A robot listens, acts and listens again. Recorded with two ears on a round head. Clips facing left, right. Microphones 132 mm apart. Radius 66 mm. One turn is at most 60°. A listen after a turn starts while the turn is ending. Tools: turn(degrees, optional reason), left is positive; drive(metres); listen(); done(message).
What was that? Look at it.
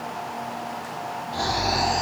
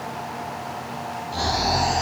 turn(degrees=-60)
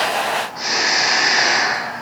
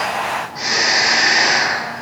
turn(degrees=-30, reason="So it is at 30° right.")
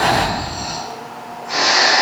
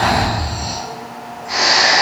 turn(degrees=-10, reason="The snoring is now 10° right.")
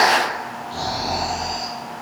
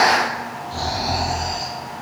done("Facing the snoring, 1 to 2 m away.")